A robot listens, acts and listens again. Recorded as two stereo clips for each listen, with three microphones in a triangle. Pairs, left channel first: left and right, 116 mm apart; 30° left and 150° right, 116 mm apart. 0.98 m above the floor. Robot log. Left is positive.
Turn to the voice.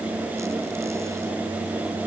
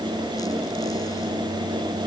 cmd idle
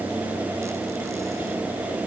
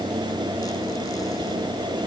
cmd idle
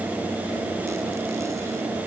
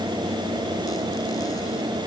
end: I can't make out anyone speaking to turn to.